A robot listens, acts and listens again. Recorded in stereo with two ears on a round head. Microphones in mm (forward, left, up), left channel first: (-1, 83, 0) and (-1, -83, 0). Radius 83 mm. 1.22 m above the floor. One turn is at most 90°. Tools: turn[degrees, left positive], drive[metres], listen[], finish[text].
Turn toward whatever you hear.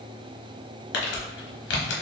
Thought: The crumpling: about 70° left or 110° left.
Action: turn[70]
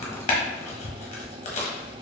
Thought: So it is at 40° left.
Action: turn[40]
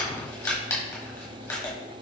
Thought: The crumpling is now 15° left.
Action: turn[15]
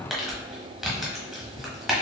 Action: finish[Facing the crumpling, 1 to 2 m away.]